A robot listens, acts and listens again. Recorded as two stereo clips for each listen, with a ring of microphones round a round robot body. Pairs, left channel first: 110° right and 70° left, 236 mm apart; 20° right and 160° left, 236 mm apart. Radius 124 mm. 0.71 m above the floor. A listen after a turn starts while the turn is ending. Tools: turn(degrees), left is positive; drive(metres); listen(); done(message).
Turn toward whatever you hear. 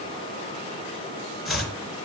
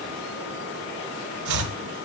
turn(degrees=160)
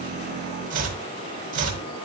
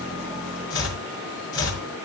turn(degrees=10)
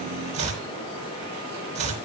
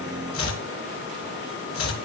done("Facing the chopping.")